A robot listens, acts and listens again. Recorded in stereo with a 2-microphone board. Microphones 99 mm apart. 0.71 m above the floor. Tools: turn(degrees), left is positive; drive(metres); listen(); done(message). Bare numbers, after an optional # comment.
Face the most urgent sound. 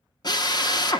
listen()
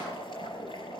listen()
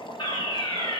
# The fire alarm: about 60° left or 120° left.
turn(60)
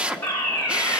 # So it is at 25° left.
turn(25)
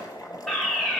done("Facing the fire alarm.")